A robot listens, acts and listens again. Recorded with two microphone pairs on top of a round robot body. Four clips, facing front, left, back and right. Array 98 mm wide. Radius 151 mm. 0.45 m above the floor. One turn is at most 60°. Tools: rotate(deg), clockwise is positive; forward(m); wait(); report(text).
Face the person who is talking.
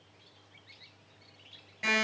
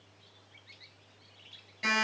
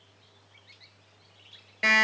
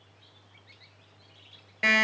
wait()
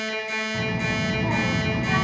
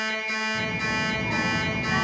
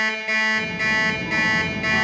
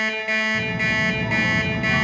rotate(10)
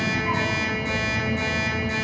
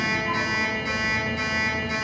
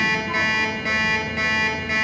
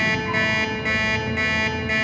report("Facing the child speaking.")